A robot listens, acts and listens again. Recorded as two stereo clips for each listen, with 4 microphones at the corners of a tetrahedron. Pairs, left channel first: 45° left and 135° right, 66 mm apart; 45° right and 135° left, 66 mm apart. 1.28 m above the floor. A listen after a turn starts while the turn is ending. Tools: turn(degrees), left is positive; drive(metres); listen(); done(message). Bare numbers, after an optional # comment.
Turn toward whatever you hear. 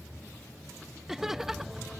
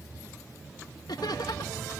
# The laughter: 50° right.
turn(-50)
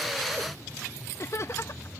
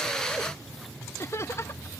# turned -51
done("Facing the laughter.")